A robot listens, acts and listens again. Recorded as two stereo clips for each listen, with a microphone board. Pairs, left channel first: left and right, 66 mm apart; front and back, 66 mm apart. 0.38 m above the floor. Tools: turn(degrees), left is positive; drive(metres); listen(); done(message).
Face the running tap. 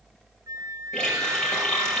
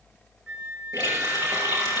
turn(degrees=10)
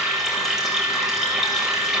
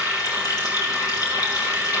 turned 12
done("Facing the running tap, over 4 m away.")